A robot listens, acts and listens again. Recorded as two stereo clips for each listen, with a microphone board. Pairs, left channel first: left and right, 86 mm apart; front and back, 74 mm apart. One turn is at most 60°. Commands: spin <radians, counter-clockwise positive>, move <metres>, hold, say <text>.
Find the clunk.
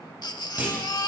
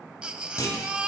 spin -0.35
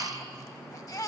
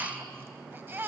say Facing where the clunk came from. I can't hear it now.